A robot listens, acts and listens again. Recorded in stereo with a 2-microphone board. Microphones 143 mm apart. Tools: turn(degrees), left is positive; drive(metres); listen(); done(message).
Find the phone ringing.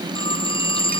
turn(degrees=35)
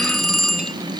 done("Found it: a phone ringing, straight ahead.")